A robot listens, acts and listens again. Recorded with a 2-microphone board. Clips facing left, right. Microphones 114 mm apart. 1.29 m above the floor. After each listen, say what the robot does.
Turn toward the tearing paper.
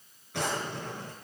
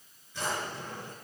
Keep listening.
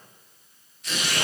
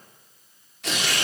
Turn 90° right.
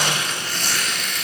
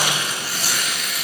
Turn 10° right.
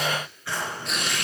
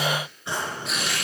Found it: tearing paper, straight ahead.